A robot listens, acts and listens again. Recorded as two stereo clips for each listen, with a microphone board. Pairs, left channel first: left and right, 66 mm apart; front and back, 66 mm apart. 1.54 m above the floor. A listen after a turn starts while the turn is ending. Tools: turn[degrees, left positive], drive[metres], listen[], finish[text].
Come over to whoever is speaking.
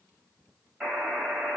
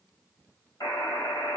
Action: listen[]
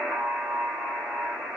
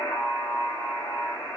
Action: listen[]
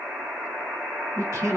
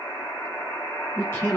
Thought: The man speaking: 45° right.
Action: turn[-45]
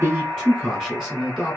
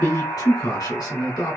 Thought: The man speaking is now 10° left.
Action: turn[10]
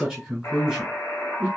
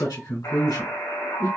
Action: drive[1.0]
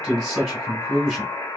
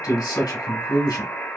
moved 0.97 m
Action: drive[1.0]
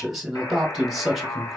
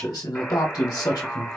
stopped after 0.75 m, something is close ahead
Action: finish[Arrived at the man speaking, straight ahead.]